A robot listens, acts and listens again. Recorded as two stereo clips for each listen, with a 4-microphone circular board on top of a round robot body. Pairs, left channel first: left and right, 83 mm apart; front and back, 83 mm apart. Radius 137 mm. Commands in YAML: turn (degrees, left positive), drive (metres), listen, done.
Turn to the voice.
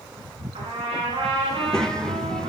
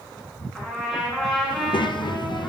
turn: 10
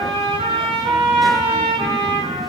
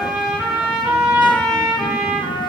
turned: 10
listen: true
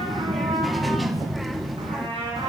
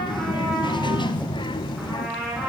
done: "Found it: a child speaking, straight ahead, under 1 m away."